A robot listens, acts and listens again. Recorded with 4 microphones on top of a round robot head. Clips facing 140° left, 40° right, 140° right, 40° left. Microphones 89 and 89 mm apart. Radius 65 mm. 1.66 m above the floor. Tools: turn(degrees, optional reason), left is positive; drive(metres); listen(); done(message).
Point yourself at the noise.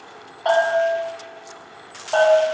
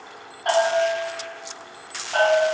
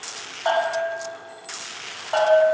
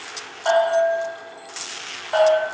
turn(degrees=135, reason="The bell: 135° left.")
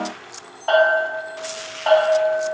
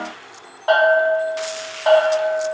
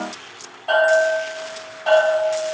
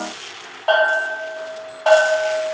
turn(degrees=30, reason="The bell is now 30° left.")
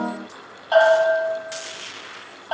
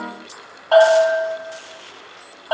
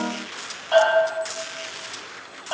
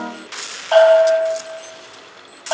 done("Facing the bell.")